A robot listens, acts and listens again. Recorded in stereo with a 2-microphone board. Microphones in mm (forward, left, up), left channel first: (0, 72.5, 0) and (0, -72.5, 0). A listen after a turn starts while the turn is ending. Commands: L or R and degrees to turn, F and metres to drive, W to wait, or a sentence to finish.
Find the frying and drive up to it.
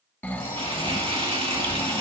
R40
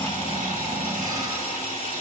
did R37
R100
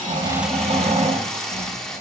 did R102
F1.0
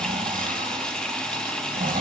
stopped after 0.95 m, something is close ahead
I am next to the frying.